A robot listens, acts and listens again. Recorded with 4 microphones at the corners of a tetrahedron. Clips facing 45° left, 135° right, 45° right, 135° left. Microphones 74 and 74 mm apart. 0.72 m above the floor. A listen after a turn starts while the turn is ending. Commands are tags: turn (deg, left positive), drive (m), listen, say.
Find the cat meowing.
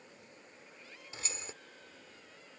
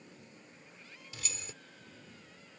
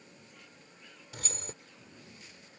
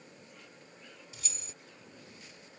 <listen/>
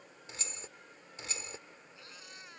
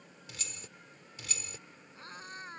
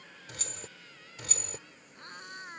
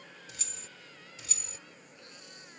<turn deg="-85"/>
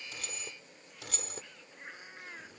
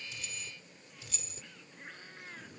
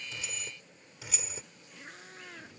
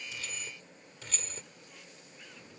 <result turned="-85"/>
<turn deg="-30"/>
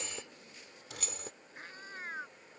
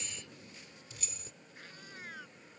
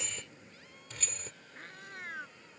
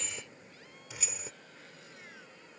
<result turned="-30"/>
<turn deg="-10"/>
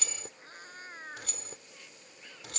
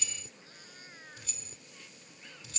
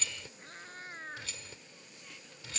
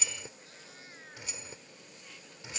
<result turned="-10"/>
<say>Facing the cat meowing.</say>